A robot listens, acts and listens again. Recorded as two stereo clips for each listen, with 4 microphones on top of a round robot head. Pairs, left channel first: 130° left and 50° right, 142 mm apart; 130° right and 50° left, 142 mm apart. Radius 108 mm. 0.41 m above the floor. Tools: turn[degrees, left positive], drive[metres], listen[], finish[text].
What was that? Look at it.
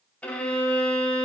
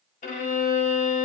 Thought: The violin: 150° right.
Action: turn[-150]
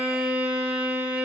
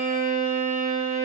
Thought: The violin is now 30° left.
Action: turn[30]
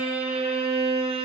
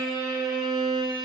Action: finish[Facing the violin.]